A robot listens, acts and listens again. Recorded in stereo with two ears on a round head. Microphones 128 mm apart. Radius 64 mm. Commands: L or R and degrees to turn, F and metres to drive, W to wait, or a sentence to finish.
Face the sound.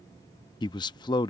L30
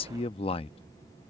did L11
L40
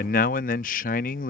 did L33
L100
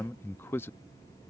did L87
L15
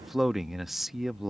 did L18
Found it: a man speaking, straight ahead.